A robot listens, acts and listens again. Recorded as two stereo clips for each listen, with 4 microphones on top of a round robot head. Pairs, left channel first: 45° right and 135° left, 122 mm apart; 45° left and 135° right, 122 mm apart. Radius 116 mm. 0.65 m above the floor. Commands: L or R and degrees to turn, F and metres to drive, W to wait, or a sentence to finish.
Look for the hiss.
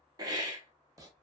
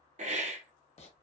R165
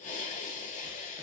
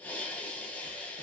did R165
R35
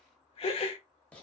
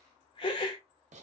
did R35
Facing the hiss.